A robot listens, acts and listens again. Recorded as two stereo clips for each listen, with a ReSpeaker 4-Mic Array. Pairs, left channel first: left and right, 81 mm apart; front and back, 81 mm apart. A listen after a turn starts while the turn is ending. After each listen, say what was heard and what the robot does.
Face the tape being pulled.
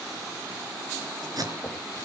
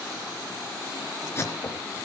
The tape being pulled: 55° right. Turn 55° right.
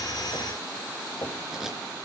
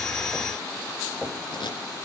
Found it: tape being pulled, straight ahead.